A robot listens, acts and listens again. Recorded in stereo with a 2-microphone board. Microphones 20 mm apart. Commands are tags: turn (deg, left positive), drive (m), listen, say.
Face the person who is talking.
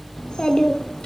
<turn deg="55"/>
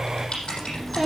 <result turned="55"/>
<say>Found it: a child speaking, straight ahead.</say>